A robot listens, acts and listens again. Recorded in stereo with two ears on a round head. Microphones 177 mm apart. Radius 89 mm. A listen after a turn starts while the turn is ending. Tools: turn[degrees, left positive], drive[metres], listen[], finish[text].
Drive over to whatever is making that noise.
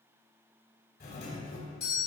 Thought: The doorbell: about 55° left or 125° left.
Action: turn[55]
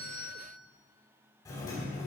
Thought: So it is at 25° left.
Action: turn[25]
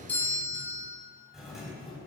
Action: drive[1.0]
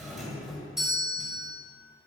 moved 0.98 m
Action: drive[1.0]
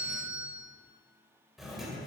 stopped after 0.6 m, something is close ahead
Action: finish[Arrived at the doorbell, straight ahead.]